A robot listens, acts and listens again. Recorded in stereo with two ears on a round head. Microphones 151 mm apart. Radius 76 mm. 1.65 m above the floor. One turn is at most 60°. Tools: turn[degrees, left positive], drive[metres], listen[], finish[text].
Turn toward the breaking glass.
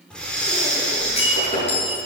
Thought: The breaking glass: about 40° left or 140° left.
Action: turn[40]
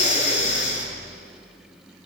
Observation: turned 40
Action: listen[]
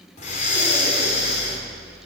Action: finish[I heard breaking glass, but can't make it out now. It was about straight ahead or 100° left.]